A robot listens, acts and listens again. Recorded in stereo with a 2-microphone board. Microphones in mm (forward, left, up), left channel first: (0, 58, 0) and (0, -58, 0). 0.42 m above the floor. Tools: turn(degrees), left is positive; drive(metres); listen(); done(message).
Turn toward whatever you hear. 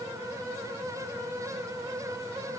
listen()
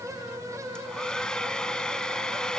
turn(degrees=30)
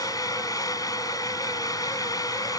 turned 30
turn(degrees=145)
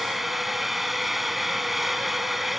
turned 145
done("Facing the hair dryer.")